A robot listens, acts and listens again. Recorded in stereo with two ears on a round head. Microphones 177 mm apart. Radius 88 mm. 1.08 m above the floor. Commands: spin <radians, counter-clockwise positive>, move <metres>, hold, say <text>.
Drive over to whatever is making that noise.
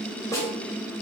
spin 0.26
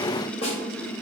spin 2.62
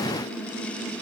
hold
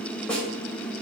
move 1.0
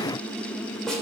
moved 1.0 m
move 1.0
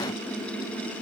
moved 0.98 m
hold
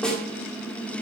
move 1.0
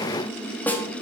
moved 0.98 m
move 1.0
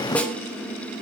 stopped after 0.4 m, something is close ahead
say Arrived at the snare drum, straight ahead.